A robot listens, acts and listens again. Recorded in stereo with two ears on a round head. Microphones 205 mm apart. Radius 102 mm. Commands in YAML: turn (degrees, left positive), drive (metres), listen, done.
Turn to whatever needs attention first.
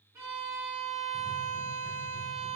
listen: true
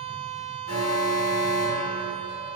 turn: 90
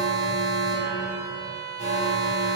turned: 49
turn: 30
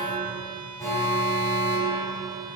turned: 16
turn: 15
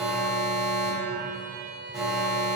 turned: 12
done: "Facing the alarm."